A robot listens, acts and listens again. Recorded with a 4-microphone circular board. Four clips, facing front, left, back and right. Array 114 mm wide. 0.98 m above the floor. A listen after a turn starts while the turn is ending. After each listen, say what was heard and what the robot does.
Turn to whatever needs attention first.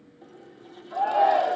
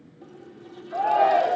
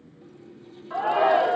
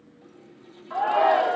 The shout: 135° right. Turn 135° right.
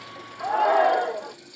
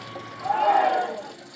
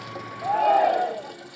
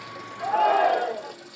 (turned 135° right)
Found it: a shout, straight ahead.